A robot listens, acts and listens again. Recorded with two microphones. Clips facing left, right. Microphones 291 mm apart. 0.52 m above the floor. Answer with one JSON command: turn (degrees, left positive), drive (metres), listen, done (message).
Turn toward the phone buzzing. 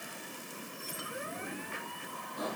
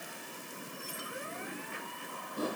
{"listen": true}
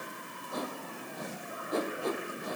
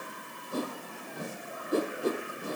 {"listen": true}
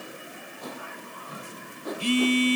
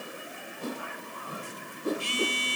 {"turn": 65}
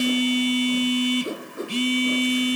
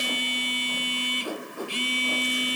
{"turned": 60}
{"turn": 55}
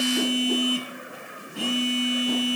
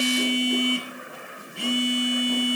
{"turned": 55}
{"done": "Found it: a phone buzzing, straight ahead, 1 to 2 m away."}